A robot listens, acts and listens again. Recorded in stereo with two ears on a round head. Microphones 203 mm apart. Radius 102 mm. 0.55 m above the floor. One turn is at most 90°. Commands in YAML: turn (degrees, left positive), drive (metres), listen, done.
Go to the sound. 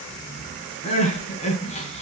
turn: 30
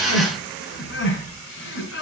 turn: 90
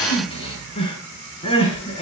turn: 25
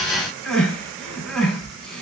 drive: 1.0
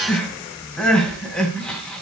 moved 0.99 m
drive: 1.0
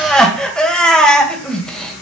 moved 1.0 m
drive: 1.0
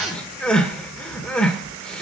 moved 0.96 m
drive: 1.0
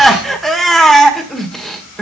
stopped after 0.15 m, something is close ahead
done: "I am next to the crying."